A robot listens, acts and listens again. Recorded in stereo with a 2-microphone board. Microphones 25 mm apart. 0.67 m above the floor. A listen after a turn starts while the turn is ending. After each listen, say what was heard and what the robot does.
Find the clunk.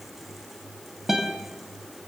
Keep listening.
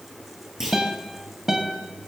Turn 30° right.
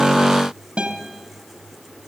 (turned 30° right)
Keep listening.
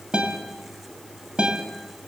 I heard a clunk, but can't make it out now. It was about 20° left or 140° right.